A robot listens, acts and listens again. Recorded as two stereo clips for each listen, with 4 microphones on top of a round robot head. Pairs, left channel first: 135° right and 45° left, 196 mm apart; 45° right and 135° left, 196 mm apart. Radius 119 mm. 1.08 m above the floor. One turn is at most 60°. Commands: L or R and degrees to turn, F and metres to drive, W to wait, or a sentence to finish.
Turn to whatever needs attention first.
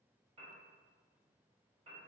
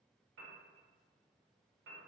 W
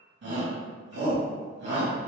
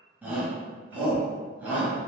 L55
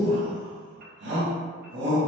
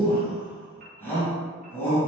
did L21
L35
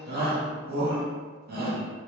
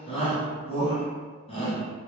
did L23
L15
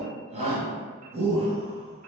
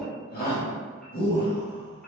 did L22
R10
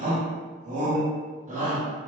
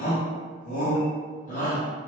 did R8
Facing the shout.